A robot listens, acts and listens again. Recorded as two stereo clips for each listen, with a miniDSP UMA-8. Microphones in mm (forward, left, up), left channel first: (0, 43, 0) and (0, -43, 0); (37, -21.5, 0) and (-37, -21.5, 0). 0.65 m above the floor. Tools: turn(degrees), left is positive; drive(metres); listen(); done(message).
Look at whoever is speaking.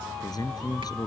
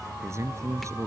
turn(degrees=130)
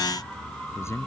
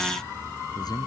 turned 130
turn(degrees=30)
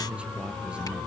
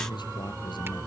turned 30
listen()
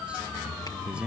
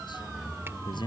turn(degrees=-10)
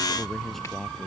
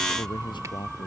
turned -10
done("Found it: a man speaking, straight ahead.")